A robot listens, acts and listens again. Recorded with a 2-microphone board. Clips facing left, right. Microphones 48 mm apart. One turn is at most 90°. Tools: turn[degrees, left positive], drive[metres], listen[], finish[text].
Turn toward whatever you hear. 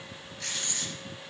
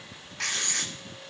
Action: turn[-90]
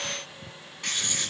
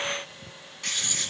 Thought: So it is at 10° left.
Action: turn[10]
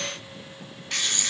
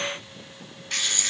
Action: finish[Facing the writing, 1 to 2 m away.]